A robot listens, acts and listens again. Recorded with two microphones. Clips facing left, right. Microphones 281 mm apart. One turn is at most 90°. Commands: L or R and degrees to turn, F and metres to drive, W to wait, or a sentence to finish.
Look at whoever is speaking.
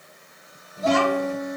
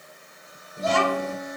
R30
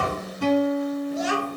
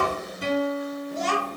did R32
L10
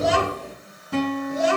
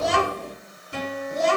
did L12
L10
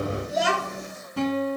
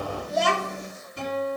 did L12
L10
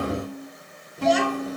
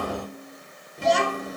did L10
Facing the child speaking.